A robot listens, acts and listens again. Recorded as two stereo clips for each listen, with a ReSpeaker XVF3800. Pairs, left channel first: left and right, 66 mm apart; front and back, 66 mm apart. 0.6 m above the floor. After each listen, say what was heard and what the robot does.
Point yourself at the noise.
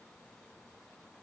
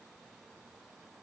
Keep listening.
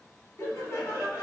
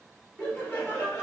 The laughter: 65° left. Turn 65° left.
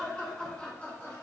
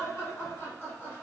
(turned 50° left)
The laughter is now 35° left. Turn 35° left.
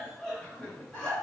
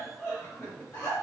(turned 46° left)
The laughter is now 30° left. Turn 30° left.
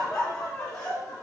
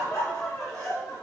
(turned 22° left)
The laughter is now 35° left. Turn 35° left.
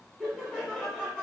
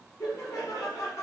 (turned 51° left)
The laughter is now 15° right. Turn 15° right.
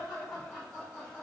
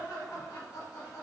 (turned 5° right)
Facing the laughter, 1 to 2 m away.